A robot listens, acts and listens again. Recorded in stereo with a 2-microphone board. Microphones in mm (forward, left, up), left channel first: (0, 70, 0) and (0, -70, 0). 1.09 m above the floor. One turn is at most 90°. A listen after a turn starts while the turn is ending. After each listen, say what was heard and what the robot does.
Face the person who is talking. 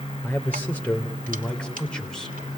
Turn 30° left.
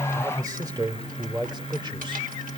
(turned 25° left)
So it is at 35° right. Turn 35° right.
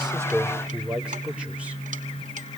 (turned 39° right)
The man speaking is now 10° right. Turn 10° right.
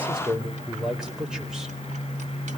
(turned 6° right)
Found it: a man speaking, straight ahead.